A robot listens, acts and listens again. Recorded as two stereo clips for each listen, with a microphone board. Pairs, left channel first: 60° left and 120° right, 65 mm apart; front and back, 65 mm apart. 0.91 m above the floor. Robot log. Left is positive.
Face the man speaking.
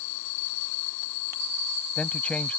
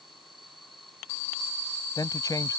note: The man speaking: 10° right.
cmd yaw -10
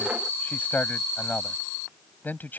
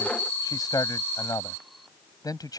end: Facing the man speaking.